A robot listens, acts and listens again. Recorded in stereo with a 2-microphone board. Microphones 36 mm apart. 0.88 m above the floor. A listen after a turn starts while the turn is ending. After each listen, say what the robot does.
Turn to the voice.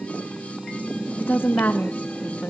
Turn 70° left.
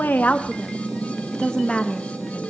Turn 25° left.
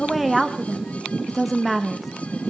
Facing the woman speaking.